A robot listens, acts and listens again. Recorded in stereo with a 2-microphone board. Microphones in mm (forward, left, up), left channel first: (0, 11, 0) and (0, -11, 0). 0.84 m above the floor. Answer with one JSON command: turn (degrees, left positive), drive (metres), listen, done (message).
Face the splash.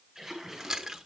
{"turn": -20}
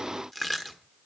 {"listen": true}
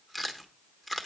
{"done": "I heard a splash, but can't make it out now. It was about straight ahead or 140° right."}